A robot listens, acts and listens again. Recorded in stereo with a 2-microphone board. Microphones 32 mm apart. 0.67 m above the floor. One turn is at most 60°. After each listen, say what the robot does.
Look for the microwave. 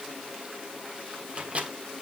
Turn 45° right.
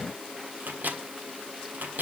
Turn 60° right.
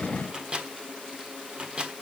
Turn 30° right.
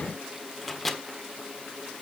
Turn 10° left.
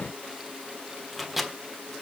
Facing the microwave, 1 to 2 m away.